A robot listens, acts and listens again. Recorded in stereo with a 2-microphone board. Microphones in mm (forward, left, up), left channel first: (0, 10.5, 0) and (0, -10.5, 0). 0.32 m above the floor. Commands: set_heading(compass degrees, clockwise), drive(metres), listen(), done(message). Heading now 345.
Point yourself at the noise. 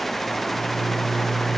set_heading(315)
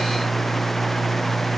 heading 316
set_heading(181)
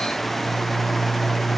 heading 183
done("Facing the microwave, 1 to 2 m away.")